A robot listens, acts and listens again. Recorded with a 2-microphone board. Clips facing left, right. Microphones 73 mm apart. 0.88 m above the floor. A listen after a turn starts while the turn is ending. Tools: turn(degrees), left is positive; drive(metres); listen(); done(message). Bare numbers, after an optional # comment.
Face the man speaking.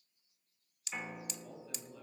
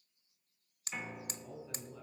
turn(-30)
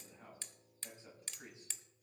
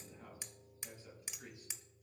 # So it is at 25° left.
turn(25)
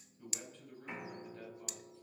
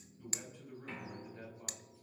# The man speaking is now 10° right.
turn(-10)
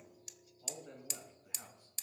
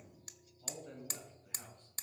done("Facing the man speaking, over 4 m away.")